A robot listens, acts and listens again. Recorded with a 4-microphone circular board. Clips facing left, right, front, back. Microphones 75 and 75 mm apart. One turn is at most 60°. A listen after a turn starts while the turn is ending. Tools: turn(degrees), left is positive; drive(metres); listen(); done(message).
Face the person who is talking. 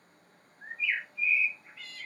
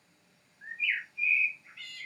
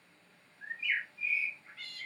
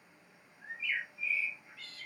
listen()
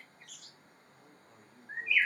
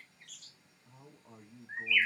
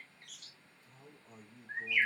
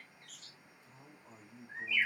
turn(degrees=-60)
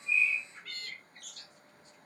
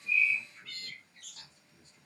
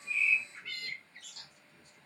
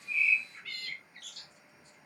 turn(degrees=-35)
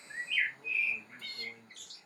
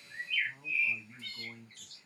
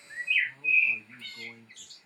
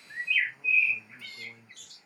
done("Found it: a man speaking, straight ahead.")